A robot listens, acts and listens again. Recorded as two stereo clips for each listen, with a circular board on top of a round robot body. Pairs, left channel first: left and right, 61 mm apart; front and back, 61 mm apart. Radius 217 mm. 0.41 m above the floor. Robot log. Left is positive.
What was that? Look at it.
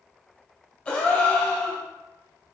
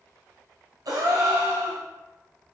note: The gasp: 165° left.
cmd yaw +165
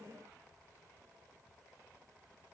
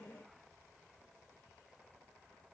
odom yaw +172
note: Nothing new. It was at 10° right.
cmd yaw -10
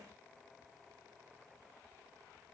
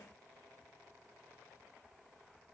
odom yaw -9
end: I heard a gasp from this way, but can't make it out now.